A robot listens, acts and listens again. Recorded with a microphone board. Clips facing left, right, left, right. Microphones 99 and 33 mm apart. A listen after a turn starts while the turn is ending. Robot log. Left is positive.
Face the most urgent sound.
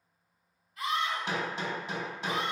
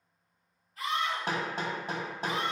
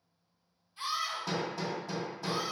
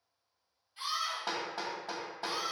note: The scream: about 40° right or 140° right.
cmd yaw -40
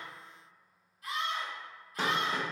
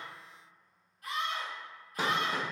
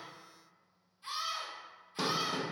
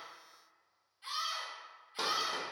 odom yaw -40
note: So it is at 90° right.
cmd yaw -90
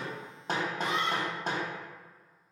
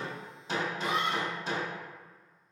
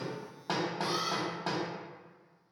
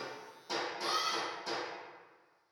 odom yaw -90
note: The scream is now 10° right.
cmd yaw -10
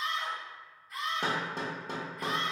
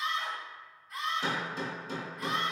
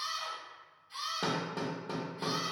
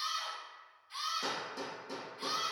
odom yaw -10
end: Facing the scream, 1 to 2 m away.